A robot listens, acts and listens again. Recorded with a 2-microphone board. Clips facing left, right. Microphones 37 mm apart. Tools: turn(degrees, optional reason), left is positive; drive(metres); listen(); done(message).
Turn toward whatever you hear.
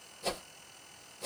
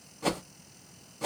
turn(degrees=-70, reason="The whoosh: about 70° right or 110° right.")
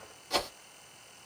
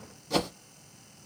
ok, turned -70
done("Found it: a whoosh, straight ahead.")